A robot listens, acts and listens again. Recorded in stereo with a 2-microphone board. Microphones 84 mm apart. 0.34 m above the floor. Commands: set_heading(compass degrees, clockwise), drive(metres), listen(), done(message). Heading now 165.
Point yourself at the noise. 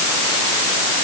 listen()
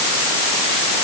listen()
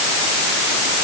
done("I can't make out anything to turn to.")